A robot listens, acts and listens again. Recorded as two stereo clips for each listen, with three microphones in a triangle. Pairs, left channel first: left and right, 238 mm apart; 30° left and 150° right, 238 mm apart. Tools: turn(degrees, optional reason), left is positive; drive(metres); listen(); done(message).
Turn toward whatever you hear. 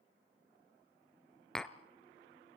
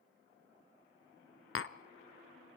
done("Facing the tapping, under 1 m away.")